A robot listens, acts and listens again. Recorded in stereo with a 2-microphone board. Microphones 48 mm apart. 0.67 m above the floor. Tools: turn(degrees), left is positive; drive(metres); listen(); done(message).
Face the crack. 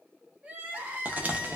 turn(degrees=-30)
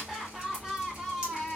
listen()
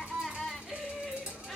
done("I heard a crack, but can't make it out now. It was about straight ahead or 120° right.")